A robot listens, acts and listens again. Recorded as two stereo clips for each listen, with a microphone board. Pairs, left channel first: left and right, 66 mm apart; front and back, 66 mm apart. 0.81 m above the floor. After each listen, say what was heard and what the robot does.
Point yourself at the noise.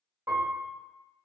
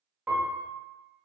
The piano: 115° right. Turn 115° right.
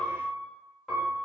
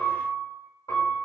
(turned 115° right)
Facing the piano.